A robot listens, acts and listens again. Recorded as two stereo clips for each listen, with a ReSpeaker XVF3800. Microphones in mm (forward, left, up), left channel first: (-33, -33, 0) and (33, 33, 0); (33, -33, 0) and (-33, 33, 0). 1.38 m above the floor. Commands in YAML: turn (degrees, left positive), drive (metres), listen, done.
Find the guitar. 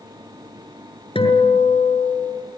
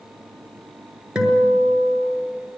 turn: -145
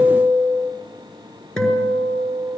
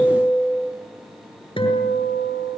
turn: -55
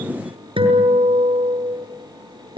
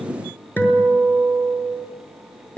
turn: 20
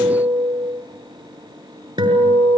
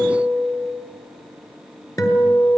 done: "Facing the guitar, over 4 m away."